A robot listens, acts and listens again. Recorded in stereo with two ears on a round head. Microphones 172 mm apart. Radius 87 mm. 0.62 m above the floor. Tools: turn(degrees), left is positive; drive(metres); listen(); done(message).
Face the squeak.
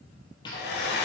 turn(degrees=25)
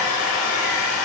listen()
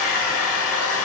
listen()
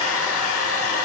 done("I heard a squeak, but can't make it out now. It was about straight ahead or 130° left.")